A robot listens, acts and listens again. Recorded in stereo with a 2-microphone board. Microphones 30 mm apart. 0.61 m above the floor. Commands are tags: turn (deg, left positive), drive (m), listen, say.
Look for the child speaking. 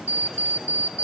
<listen/>
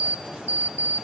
<listen/>
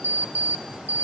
<say>I can't make out a child speaking, only an alarm clock.</say>